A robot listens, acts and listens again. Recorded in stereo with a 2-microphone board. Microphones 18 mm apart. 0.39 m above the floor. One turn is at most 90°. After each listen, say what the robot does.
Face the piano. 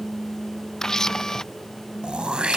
Keep listening.
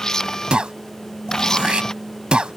Keep listening.
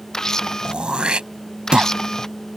I can't make out a piano to turn to.